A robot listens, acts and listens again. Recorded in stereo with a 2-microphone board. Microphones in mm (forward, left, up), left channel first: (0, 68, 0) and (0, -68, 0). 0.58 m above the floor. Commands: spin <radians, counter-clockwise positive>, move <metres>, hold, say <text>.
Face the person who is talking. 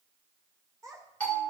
spin -0.44
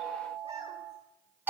hold
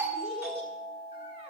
hold
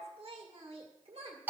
spin -2.27
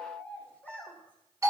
spin 0.17
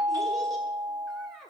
say Found it: a child speaking, straight ahead, 1 to 2 m away.